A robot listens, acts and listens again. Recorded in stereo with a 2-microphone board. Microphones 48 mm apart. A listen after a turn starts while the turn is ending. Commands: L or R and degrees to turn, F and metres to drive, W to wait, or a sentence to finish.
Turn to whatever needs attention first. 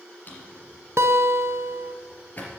W
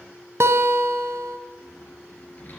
W
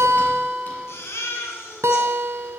L60
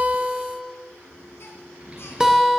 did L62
W
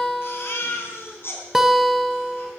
L55
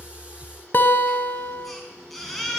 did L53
Facing the baby crying.